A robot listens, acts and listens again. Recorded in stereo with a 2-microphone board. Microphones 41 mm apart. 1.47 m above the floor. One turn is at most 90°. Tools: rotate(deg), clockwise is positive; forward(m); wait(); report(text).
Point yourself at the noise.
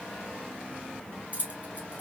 rotate(35)
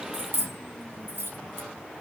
rotate(90)
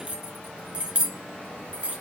rotate(30)
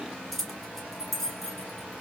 report("Facing the keys jangling.")